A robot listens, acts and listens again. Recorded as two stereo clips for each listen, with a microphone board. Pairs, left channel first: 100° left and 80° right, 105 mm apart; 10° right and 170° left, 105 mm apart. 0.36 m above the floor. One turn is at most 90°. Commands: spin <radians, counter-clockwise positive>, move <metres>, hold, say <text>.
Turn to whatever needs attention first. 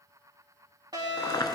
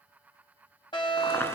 spin -0.70
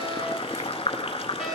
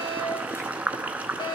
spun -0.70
say Facing the fire alarm.